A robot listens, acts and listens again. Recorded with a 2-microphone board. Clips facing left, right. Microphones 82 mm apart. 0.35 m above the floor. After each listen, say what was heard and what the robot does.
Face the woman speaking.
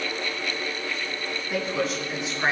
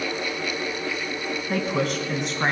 The woman speaking: about 65° right or 115° right. Turn 65° right.
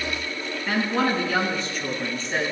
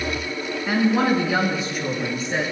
So it is at 15° right. Turn 15° right.
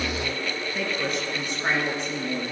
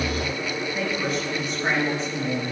Found it: a woman speaking, straight ahead.